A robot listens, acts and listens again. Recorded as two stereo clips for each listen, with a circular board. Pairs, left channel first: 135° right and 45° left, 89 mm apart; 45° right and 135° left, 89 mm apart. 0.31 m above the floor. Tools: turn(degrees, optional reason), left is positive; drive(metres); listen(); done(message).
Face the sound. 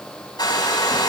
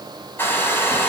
turn(degrees=-110, reason="The hair dryer: 110° right.")
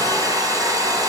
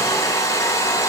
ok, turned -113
done("Found it: a hair dryer, straight ahead, 2 to 4 m away.")